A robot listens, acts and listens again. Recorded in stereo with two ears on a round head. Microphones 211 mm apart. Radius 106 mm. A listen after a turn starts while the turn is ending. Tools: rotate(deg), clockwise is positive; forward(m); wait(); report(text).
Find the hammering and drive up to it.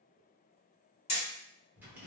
rotate(-25)
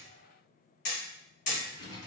rotate(-130)
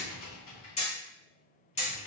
rotate(-30)
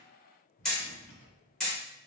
forward(1.0)
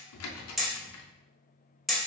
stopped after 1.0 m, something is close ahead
report("I am next to the hammering.")